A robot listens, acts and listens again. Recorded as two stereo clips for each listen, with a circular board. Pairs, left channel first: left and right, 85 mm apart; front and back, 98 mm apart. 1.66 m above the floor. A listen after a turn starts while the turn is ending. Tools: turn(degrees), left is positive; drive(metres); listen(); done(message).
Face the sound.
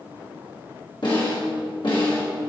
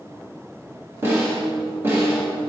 turn(degrees=115)
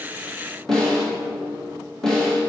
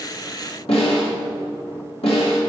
done("Found it: a snare drum, straight ahead, 2 to 4 m away.")